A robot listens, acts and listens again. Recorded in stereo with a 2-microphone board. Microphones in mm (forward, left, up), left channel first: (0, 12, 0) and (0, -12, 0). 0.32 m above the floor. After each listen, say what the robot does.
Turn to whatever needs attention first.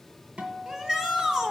Turn 20° right.
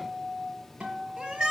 Turn 135° right.
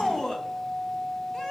Turn 25° left.
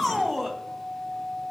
Facing the shout, 1 to 2 m away.